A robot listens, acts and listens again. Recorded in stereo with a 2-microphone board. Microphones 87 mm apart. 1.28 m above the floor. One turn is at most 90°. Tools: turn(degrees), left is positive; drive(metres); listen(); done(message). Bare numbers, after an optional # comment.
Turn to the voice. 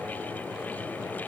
listen()
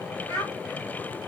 # The child speaking: about 35° left or 145° left.
turn(35)
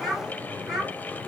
done("Facing the child speaking.")